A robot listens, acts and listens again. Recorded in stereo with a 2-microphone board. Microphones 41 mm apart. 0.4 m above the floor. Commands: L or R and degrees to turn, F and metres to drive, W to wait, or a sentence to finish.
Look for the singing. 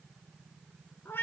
W
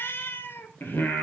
L65
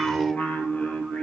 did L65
L35
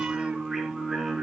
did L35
Found it: singing, straight ahead, over 4 m away.